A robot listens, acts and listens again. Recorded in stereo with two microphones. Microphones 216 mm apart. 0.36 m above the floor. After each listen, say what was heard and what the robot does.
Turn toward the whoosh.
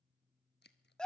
Keep listening.
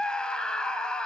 Keep listening.
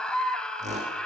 The whoosh: about 30° right or 150° right. Turn 30° right.
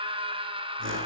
So it is at 120° right. Turn 120° right.
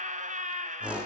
Facing the whoosh.